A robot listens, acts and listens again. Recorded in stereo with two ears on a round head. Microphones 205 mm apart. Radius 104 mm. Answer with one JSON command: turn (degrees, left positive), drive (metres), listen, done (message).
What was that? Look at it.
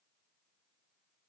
{"listen": true}
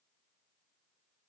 {"listen": true}
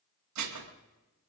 {"turn": -90}
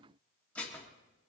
{"done": "Facing the dishes clattering, 1 to 2 m away."}